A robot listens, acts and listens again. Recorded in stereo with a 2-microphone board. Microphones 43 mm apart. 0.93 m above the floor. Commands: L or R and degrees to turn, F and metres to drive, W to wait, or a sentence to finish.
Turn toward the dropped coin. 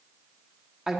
W
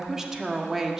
W
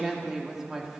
I can't make out a dropped coin, only a woman speaking.